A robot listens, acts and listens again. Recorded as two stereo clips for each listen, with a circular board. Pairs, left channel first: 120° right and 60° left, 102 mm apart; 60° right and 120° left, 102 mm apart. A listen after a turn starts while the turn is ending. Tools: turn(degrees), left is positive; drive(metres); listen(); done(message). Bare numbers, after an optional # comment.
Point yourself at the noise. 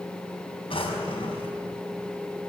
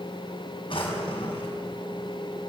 # The drawer: 95° right.
turn(-95)
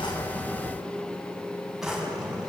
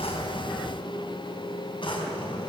# The drawer is now 25° right.
turn(-25)
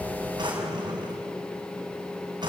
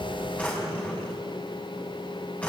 # The drawer is now 15° left.
turn(15)
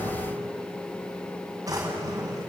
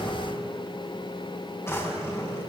done("Facing the drawer.")